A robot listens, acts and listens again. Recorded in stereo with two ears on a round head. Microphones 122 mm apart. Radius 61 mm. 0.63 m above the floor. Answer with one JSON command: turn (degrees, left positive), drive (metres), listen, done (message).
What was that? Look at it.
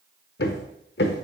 {"turn": 90}
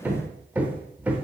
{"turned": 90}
{"turn": -10}
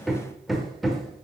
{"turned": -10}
{"done": "Facing the hammering, under 1 m away."}